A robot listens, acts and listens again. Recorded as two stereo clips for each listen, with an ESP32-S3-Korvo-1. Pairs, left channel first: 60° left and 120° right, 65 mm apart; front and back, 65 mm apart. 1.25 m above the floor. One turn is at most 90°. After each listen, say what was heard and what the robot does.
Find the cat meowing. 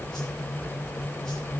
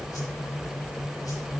Keep listening.
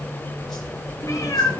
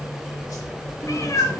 The cat meowing: 30° left. Turn 30° left.
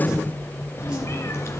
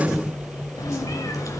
The cat meowing is now 20° left. Turn 20° left.
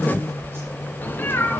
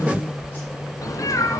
The cat meowing is now 10° left. Turn 10° left.
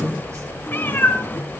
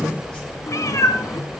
The cat meowing is now 10° left. Turn 10° left.
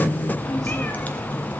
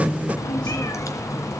Found it: a cat meowing, straight ahead.